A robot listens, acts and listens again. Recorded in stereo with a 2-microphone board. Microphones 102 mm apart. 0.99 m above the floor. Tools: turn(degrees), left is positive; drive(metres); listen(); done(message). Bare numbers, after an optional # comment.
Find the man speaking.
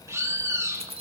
listen()
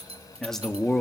turn(30)
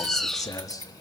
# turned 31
# So it is at 145° left.
turn(145)
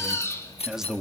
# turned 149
done("Found it: a man speaking, straight ahead, 1 to 2 m away.")